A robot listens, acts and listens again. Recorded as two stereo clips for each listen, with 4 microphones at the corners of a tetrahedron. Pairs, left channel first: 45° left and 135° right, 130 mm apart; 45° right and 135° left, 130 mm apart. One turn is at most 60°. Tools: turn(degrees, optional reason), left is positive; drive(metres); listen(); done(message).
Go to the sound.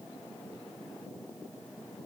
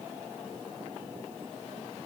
listen()
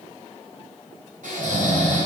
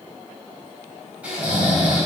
turn(degrees=-60, reason="The snoring: 145° right.")
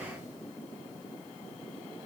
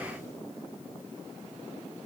turn(degrees=-60, reason="Nothing new. It was at 85° right.")
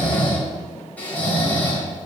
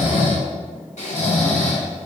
turn(degrees=-35, reason="The snoring is now 35° right.")
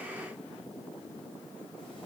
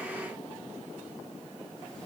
listen()
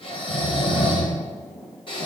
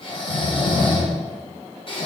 drive(metres=1.0)
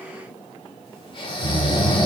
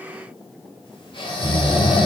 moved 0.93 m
drive(metres=1.0)
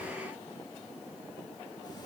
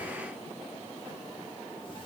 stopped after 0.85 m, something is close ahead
listen()
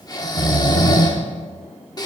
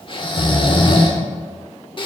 turn(degrees=-10, reason="The snoring is now 10° right.")
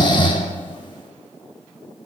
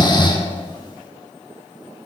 done("Arrived at the snoring, straight ahead.")